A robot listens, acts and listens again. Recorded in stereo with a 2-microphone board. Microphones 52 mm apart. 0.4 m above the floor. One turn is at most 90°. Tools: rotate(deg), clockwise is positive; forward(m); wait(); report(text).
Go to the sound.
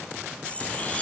wait()
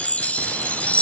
rotate(-25)
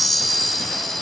forward(1.0)
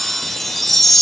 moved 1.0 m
forward(1.0)
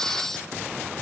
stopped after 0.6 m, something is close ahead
rotate(-15)
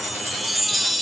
report("Arrived at the chime, straight ahead.")